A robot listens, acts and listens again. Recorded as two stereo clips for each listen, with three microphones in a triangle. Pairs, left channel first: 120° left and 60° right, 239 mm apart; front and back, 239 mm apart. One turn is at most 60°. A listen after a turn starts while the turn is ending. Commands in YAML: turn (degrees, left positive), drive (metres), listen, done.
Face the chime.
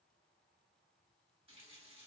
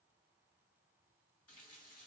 listen: true
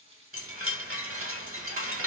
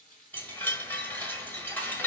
turn: -60
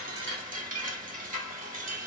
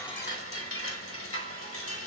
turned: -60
turn: -10
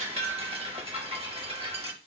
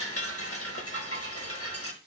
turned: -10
done: "Found it: a chime, straight ahead, 1 to 2 m away."